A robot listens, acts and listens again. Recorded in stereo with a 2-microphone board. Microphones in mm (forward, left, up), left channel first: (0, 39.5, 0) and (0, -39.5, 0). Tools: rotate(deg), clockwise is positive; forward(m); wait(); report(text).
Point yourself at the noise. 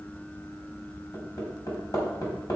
rotate(-50)
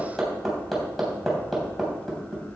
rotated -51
report("Found it: hammering, straight ahead, 2 to 4 m away.")